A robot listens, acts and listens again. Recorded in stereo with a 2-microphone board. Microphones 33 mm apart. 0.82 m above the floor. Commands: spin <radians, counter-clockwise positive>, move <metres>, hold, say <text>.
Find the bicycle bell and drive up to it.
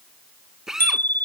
spin 1.57
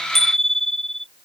spin 0.17
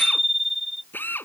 move 1.0
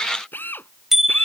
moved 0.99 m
spin -0.17
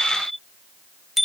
move 1.0
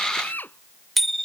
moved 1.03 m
move 1.0
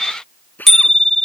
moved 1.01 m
spin 0.17
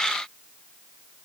hold
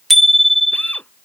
move 1.0
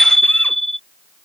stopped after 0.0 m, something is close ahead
say I am next to the bicycle bell.